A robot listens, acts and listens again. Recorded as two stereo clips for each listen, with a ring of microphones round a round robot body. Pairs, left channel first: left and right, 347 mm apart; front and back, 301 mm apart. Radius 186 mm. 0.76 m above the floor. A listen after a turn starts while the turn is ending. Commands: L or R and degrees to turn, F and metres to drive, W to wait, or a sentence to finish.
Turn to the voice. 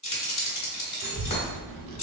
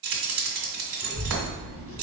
R55
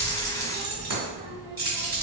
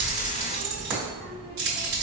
R10
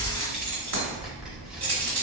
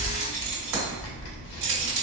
Found it: a child speaking, straight ahead, 1 to 2 m away.